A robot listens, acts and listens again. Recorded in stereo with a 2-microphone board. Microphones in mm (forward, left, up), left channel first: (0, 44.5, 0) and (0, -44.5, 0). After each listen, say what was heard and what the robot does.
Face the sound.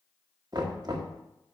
The knocking: about 50° right or 130° right. Turn 50° right.
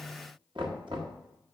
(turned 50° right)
So it is at 75° right. Turn 75° right.
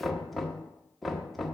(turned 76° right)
Facing the knocking, 1 to 2 m away.